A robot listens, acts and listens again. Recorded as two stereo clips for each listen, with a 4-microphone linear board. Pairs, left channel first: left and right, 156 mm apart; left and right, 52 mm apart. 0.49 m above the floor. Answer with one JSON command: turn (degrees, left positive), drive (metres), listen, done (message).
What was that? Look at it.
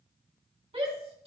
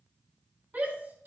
{"turn": -40}
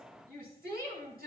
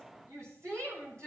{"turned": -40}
{"turn": -100}
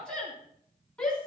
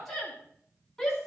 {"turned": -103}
{"done": "Facing the shout."}